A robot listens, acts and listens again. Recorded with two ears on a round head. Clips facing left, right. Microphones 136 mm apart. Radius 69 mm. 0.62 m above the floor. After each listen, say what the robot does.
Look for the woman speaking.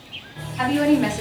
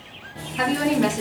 Turn 60° right.
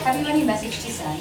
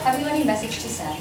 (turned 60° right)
Turn 15° right.
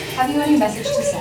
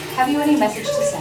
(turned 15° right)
Turn 10° left.
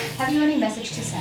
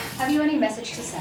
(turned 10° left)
Turn 20° left.
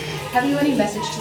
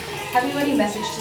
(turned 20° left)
Turn 25° left.
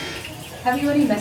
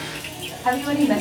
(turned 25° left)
Turn 20° left.
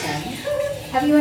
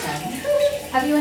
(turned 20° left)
Turn 10° left.
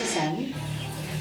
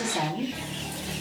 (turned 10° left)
Found it: a woman speaking, straight ahead, 1 to 2 m away.